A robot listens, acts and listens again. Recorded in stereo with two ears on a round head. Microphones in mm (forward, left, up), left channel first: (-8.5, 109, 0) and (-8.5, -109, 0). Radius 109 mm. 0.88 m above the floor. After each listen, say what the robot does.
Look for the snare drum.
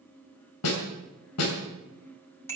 Turn 70° left.
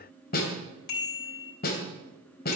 Turn 40° left.
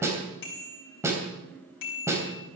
Turn 10° right.
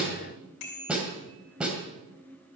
Facing the snare drum, 2 to 4 m away.